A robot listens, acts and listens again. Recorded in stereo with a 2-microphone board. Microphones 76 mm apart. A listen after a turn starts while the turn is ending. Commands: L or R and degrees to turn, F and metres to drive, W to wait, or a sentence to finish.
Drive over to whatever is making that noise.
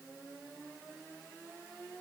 W
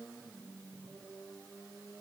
W
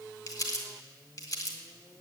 L55
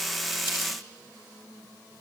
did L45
L80
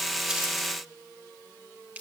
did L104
R25
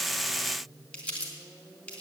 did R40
L15
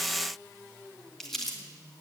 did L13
F1.0
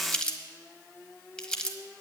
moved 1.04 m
L10
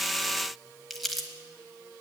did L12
F1.0
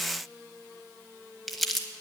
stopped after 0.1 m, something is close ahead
Arrived at the crumpling, straight ahead.